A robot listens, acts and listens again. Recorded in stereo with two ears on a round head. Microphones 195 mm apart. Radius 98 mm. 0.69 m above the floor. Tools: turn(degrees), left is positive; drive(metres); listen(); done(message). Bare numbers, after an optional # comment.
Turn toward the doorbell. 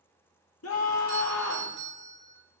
# The doorbell: about 55° right or 125° right.
turn(-55)
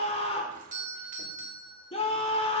# So it is at 45° right.
turn(-45)
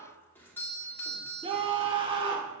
# The doorbell is now 10° left.
turn(10)
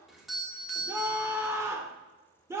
done("Found it: a doorbell, straight ahead, 2 to 4 m away.")